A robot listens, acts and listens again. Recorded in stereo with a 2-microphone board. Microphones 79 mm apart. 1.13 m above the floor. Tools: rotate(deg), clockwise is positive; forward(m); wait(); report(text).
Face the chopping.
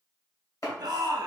rotate(-45)
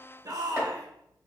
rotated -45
wait()
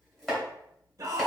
rotate(-10)
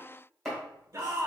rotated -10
report("Found it: chopping, straight ahead.")